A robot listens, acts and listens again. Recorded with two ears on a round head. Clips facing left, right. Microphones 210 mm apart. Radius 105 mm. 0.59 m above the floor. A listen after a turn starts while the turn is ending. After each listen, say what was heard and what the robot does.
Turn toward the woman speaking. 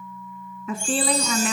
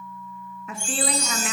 The woman speaking: about 75° left or 105° left. Turn 75° left.
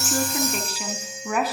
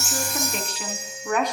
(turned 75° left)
Found it: a woman speaking, straight ahead.